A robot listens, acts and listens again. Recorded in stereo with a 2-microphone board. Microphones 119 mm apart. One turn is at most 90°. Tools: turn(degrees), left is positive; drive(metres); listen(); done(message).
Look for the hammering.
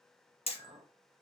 turn(degrees=60)
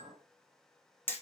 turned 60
turn(degrees=20)
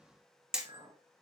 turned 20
done("Found it: hammering, straight ahead, under 1 m away.")